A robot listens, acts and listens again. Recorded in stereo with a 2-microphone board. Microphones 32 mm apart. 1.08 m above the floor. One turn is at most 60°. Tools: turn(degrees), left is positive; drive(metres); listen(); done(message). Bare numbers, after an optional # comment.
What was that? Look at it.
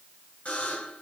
# The buzzer: about 50° left or 130° left.
turn(50)
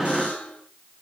# So it is at 75° left.
turn(60)
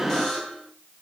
# The buzzer is now 15° left.
turn(15)
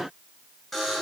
done("Found it: a buzzer, straight ahead, over 4 m away.")